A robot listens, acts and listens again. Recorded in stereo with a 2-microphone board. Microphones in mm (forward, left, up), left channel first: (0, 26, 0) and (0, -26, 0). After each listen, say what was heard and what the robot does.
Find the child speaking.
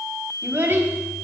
The child speaking: about 40° right or 140° right. Turn 40° right.
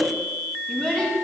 So it is at 15° left. Turn 15° left.
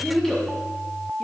The child speaking is now 10° left. Turn 10° left.
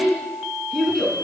Facing the child speaking, 2 to 4 m away.